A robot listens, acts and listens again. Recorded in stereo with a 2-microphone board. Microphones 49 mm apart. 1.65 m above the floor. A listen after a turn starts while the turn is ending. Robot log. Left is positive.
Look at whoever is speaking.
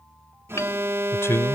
note: The man speaking: about 65° left or 115° left.
cmd yaw +65
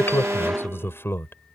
note: So it is at 50° left.
cmd yaw +50
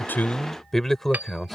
end: Found it: a man speaking, straight ahead.